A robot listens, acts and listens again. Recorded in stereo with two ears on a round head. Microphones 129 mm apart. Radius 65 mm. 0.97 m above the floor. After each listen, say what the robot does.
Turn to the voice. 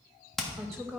Turn 30° left.
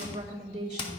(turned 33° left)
Turn 35° right.
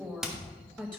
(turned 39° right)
Found it: a woman speaking, straight ahead.